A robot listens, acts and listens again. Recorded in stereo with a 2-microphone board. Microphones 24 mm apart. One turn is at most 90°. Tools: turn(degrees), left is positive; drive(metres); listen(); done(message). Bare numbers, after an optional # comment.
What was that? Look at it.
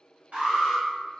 # The alarm: about 65° right or 115° right.
turn(-65)
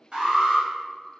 # So it is at 35° right.
turn(-35)
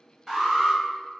done("Found it: an alarm, straight ahead.")